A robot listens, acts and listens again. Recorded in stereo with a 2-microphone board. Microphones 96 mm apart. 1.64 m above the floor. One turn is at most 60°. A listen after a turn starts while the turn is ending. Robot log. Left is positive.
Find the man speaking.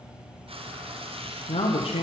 cmd yaw +60
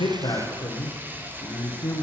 note: So it is at 35° left.
cmd yaw +35
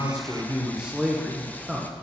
end: Facing the man speaking.